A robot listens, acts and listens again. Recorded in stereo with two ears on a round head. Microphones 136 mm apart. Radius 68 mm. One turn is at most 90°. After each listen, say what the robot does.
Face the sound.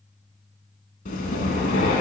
Turn 50° left.
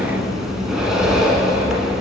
Facing the breathing.